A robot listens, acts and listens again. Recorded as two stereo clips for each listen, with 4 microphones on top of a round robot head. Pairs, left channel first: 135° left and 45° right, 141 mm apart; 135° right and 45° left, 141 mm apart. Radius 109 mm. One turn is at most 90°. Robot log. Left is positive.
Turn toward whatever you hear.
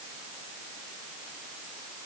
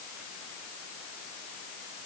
cmd idle
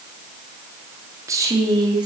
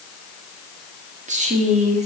note: The woman speaking: 10° left.
cmd yaw +10
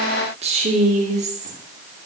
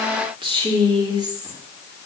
note: The woman speaking is now 15° right.
cmd yaw -15
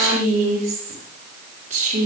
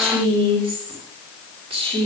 note: The woman speaking is now 10° right.
cmd yaw -10
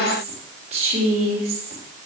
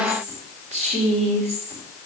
end: Facing the woman speaking, 2 to 4 m away.